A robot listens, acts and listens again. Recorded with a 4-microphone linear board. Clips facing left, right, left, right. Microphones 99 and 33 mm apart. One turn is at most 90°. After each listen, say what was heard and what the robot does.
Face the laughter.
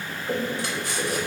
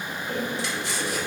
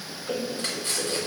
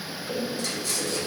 The laughter: about 40° left or 140° left. Turn 40° left.
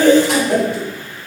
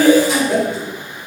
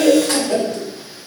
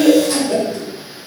So it is at 10° right. Turn 10° right.
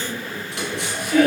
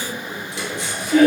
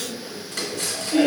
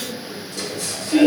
The laughter is now 30° right. Turn 30° right.
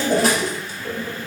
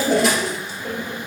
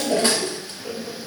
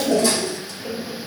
The laughter is now 15° right. Turn 15° right.
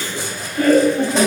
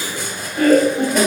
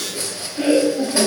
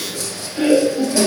The laughter is now 15° right. Turn 15° right.
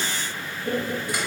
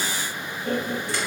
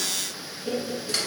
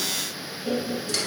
Facing the laughter.